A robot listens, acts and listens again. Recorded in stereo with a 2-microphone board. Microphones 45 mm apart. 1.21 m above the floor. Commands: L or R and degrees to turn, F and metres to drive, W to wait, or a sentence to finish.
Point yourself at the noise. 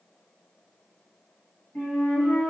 L50
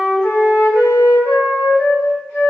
L70
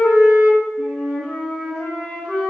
Facing the flute, 1 to 2 m away.